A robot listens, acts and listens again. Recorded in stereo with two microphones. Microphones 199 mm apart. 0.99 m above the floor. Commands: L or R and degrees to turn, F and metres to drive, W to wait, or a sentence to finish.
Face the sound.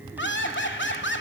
L70
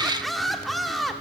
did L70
Found it: laughter, straight ahead, 2 to 4 m away.